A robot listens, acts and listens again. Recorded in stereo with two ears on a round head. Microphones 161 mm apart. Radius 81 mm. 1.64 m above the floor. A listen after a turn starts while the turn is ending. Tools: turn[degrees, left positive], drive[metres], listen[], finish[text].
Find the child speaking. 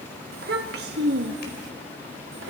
Thought: The child speaking: about 70° right or 110° right.
Action: turn[-70]
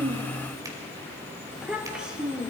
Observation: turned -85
Action: finish[Found it: a child speaking, straight ahead, 2 to 4 m away.]